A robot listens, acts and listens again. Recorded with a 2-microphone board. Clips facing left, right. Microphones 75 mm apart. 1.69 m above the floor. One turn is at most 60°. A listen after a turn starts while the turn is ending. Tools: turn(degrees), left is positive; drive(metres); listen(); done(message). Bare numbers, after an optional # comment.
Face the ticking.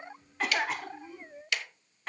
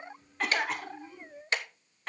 # The ticking: about 35° right or 145° right.
turn(-35)
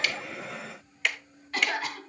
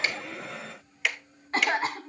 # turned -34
done("Facing the ticking, 1 to 2 m away.")